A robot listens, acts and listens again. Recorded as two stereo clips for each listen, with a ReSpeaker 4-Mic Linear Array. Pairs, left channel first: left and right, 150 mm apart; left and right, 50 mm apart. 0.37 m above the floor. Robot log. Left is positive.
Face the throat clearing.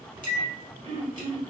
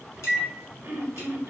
note: The throat clearing: about 40° right or 140° right.
cmd yaw -40
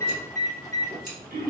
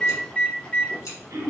note: So it is at 95° right.
cmd yaw -95
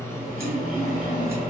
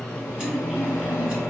cmd idle
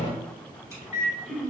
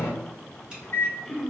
end: Facing the throat clearing, under 1 m away.